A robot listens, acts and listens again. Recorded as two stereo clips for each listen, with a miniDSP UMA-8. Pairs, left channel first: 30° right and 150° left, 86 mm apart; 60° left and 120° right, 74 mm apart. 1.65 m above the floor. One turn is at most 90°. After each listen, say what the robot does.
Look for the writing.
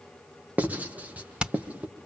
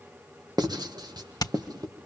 Turn 90° right.
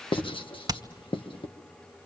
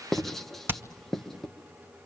Turn 25° right.
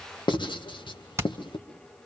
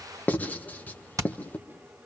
Facing the writing, 1 to 2 m away.